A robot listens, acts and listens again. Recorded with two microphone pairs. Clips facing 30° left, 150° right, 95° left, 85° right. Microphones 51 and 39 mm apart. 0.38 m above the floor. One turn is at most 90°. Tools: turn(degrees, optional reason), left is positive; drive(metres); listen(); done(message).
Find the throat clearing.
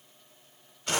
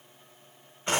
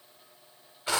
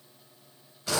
listen()
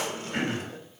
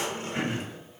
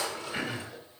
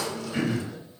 turn(degrees=20, reason="The throat clearing: 20° left.")
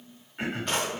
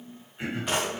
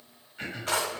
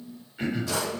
done("Facing the throat clearing, 1 to 2 m away.")